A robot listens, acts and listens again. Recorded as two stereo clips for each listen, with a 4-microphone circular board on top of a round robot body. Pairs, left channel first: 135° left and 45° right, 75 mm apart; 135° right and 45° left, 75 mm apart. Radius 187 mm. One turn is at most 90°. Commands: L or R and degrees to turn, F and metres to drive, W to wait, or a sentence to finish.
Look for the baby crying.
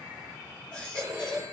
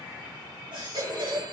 L55
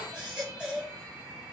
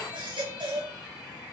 L35
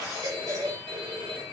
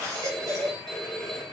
Facing the baby crying.